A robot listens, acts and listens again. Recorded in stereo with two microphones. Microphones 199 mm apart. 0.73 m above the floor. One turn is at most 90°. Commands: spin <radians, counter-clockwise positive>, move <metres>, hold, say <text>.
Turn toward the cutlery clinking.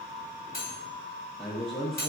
spin 0.87
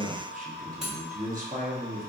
say Facing the cutlery clinking.